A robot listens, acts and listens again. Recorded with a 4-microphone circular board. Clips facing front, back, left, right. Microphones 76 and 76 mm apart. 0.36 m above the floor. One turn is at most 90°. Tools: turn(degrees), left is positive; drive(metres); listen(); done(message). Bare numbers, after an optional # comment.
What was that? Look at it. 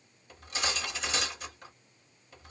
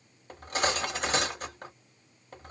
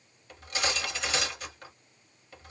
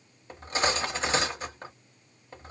# The cutlery clinking: 145° right.
turn(-90)
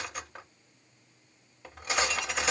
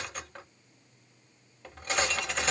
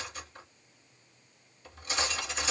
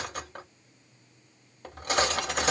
# The cutlery clinking is now 80° right.
turn(-80)
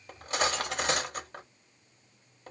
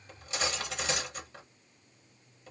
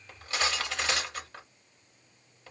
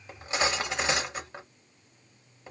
# The cutlery clinking is now 25° right.
turn(-25)
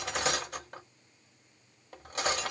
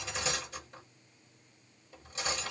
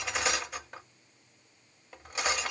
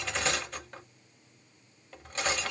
# The cutlery clinking is now 10° left.
turn(10)
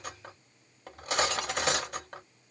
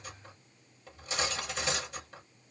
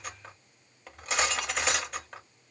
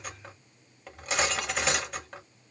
done("Facing the cutlery clinking, under 1 m away.")